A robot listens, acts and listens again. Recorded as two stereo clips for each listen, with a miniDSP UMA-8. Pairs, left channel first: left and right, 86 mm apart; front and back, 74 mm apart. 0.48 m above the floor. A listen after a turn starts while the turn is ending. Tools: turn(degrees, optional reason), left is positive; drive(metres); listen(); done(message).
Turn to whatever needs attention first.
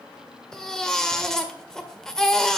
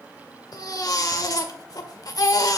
turn(degrees=10, reason="The baby crying: 10° left.")
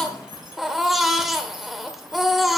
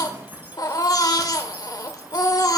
done("Facing the baby crying.")